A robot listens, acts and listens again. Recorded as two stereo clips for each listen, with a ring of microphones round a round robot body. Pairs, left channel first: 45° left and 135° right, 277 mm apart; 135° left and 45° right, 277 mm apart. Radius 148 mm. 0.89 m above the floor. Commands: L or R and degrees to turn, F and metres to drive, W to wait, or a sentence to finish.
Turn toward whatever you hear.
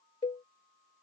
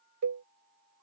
R25
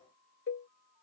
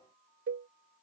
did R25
Facing the cowbell.